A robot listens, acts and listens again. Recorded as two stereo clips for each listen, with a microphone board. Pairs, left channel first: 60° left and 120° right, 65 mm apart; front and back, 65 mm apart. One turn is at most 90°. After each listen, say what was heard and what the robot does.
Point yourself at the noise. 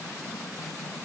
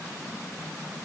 Keep listening.
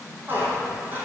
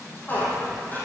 The squeak: 60° right. Turn 60° right.
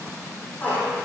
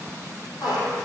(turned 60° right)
Facing the squeak, 2 to 4 m away.